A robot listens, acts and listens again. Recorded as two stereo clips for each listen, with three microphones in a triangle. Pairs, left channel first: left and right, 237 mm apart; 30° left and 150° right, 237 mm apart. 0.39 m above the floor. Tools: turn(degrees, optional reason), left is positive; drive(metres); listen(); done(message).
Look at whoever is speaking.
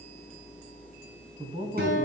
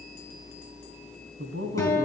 turn(degrees=-145, reason="The man speaking: 145° right.")
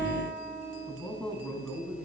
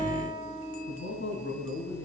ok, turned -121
turn(degrees=10, reason="The man speaking is now 10° left.")
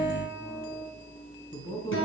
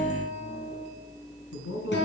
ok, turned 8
turn(degrees=20, reason="The man speaking is now 20° left.")
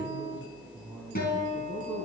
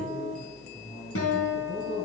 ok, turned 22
done("Found it: a man speaking, straight ahead, 2 to 4 m away.")